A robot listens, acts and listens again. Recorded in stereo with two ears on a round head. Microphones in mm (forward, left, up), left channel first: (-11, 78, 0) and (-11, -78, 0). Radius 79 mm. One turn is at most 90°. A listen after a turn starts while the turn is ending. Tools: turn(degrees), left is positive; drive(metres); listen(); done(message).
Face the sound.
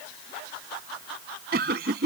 turn(degrees=-60)
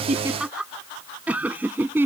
turn(degrees=-15)
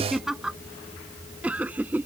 turn(degrees=-10)
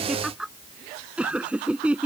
done("Found it: laughter, straight ahead.")